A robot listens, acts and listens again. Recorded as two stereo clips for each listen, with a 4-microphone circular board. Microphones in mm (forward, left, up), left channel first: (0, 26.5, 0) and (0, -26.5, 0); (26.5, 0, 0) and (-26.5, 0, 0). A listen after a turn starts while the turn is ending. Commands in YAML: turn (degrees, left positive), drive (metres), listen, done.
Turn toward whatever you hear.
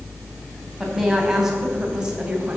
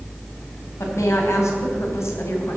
turn: -20
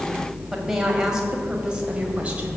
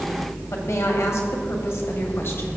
turn: -25
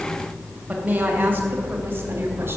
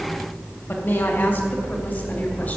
turn: -40
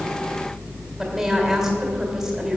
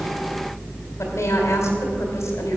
done: "Facing the woman speaking."